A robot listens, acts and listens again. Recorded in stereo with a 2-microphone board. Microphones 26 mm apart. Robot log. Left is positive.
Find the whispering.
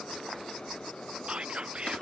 note: The whispering: about 45° right or 135° right.
cmd yaw -45
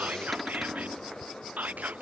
note: So it is at 90° right.
cmd yaw -90
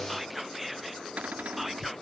end: Found it: whispering, straight ahead.